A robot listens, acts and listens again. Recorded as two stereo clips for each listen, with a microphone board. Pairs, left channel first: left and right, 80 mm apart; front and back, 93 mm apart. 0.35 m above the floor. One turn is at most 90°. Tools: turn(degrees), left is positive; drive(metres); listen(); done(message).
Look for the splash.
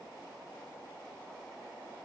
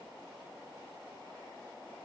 listen()
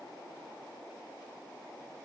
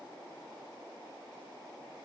listen()
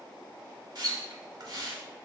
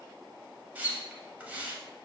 turn(degrees=-90)
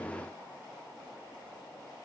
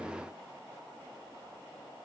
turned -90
turn(degrees=-20)
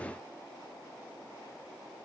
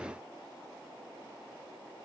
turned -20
done("Facing where the splash came from. I can't hear it now.")